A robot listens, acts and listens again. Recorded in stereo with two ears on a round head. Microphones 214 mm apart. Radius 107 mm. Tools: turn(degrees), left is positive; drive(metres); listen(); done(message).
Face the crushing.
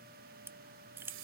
turn(degrees=-30)
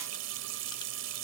listen()
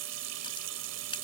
listen()
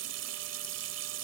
done("I heard crushing, but can't make it out now. It was about 20° left or 140° right.")